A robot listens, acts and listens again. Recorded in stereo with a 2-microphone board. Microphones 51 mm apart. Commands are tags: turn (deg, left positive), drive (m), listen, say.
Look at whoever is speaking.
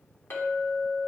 <listen/>
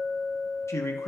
<turn deg="70"/>
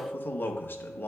<turn deg="40"/>
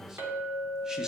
<listen/>
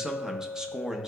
<turn deg="-15"/>
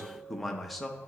<say>Facing the man speaking.</say>